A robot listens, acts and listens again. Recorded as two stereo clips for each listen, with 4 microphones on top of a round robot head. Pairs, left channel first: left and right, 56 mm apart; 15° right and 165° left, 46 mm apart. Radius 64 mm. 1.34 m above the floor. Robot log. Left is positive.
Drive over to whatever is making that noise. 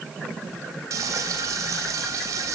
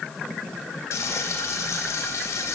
note: The frying: 50° right.
cmd yaw -50
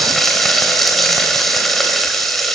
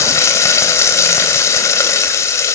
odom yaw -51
cmd fwd 1.0
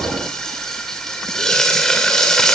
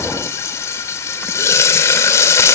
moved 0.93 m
cmd fwd 1.0
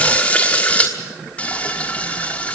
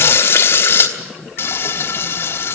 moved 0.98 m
note: The frying is now 15° left.
cmd yaw +15
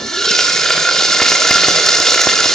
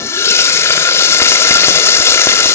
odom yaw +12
cmd fwd 1.0
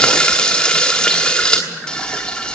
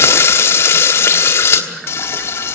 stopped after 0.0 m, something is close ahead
note: The frying is now 10° left.
cmd yaw +10
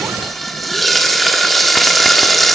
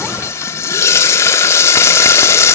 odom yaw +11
end: I am next to the frying.